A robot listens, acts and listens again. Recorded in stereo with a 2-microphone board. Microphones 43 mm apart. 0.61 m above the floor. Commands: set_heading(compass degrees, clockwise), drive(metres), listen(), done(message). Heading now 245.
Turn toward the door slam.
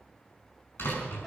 set_heading(175)
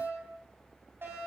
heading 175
listen()
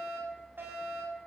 done("I heard a door slam, but can't make it out now. It was about straight ahead or 40° left.")